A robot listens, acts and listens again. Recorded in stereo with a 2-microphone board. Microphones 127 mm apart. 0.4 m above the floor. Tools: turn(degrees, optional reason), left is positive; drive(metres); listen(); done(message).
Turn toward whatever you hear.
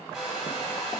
turn(degrees=-30)
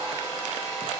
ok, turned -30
turn(degrees=25, reason="So it is at 25° left.")
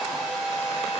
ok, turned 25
turn(degrees=-10, reason="The hair dryer is now 10° right.")
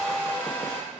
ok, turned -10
done("Found it: a hair dryer, straight ahead.")